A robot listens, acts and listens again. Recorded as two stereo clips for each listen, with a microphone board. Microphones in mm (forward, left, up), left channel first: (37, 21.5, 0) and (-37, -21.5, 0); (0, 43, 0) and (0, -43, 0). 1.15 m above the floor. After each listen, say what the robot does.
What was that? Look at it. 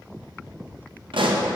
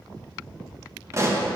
Turn 145° right.
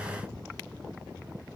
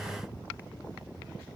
Facing where the pop came from. I can't hear it now.